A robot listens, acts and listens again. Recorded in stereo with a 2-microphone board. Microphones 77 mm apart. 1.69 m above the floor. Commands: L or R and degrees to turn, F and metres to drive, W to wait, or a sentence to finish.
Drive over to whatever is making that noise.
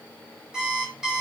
R30
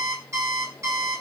R135
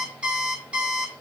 R15
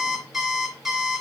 F1.0
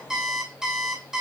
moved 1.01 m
R10
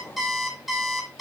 F1.0
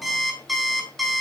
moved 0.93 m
F1.0
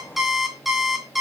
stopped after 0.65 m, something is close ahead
I am next to the alarm clock.